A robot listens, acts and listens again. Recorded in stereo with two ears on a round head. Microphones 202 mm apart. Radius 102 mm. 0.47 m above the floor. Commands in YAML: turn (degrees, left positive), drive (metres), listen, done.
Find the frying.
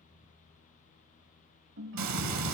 turn: -90
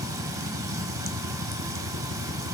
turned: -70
turn: -15
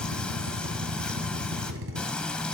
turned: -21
done: "Facing the frying, under 1 m away."